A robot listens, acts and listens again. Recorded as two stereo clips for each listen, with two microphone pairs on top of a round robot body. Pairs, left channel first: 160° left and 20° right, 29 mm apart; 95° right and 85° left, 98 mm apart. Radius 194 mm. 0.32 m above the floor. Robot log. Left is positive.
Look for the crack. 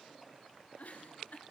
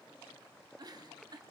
cmd idle
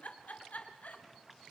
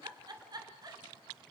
cmd idle
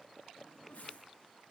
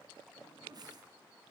end: I can't make out a crack, only a giggle.